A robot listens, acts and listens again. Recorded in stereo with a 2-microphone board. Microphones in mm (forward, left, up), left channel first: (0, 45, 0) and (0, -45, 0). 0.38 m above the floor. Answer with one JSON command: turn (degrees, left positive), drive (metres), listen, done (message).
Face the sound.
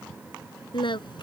{"turn": 60}
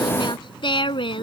{"turn": 70}
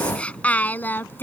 {"turn": 25}
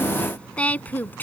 {"turn": 20}
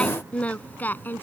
{"turn": 20}
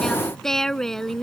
{"done": "Facing the singing."}